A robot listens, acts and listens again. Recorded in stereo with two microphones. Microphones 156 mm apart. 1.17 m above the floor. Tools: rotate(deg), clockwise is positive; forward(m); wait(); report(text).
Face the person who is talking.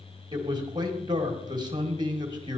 rotate(30)
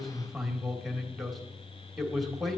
report("Facing the man speaking.")